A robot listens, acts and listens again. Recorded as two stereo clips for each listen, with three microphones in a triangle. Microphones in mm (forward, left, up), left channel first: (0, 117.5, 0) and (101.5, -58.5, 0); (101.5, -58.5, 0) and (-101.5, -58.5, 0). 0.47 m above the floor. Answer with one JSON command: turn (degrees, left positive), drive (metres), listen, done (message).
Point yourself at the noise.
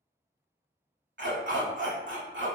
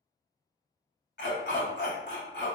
{"turn": -35}
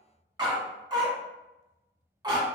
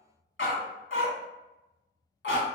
{"turn": 10}
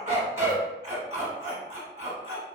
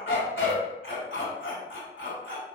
{"done": "Facing the dog barking."}